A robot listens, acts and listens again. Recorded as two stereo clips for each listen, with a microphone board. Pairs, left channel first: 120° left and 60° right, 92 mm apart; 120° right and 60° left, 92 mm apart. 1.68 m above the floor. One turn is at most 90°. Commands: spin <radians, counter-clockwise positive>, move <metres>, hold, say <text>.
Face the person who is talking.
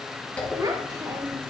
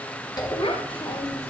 spin -1.57
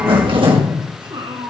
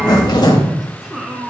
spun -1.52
spin -0.44
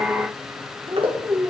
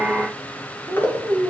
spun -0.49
say Found it: a child speaking, straight ahead.